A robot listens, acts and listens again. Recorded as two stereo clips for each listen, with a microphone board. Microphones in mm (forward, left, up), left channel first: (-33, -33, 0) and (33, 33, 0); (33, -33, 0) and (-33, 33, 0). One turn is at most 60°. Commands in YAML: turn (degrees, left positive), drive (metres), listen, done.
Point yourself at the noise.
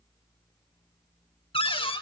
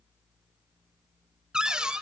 turn: -60
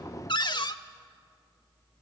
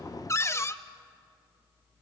turn: -60
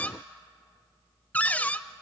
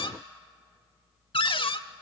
turn: -60
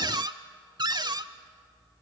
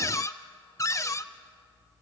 turn: 10
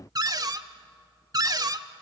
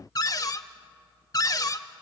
done: "Facing the cupboard door."